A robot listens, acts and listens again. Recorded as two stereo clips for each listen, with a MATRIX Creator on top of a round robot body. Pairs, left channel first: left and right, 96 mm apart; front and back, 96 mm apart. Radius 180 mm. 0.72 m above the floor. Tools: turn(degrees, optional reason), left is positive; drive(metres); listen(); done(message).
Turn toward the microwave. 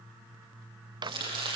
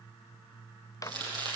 turn(degrees=-50, reason="The microwave: 50° right.")
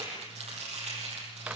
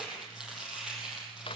listen()
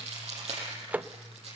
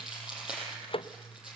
turn(degrees=-15, reason="The microwave is now 15° right.")
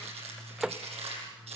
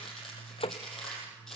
done("Found it: a microwave, straight ahead.")